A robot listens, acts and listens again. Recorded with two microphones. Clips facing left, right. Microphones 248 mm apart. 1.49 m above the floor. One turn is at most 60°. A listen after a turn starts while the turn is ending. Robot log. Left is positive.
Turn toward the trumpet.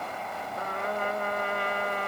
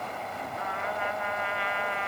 note: The trumpet: about 45° left or 135° left.
cmd yaw +45
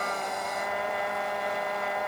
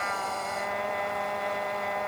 end: Found it: a trumpet, straight ahead.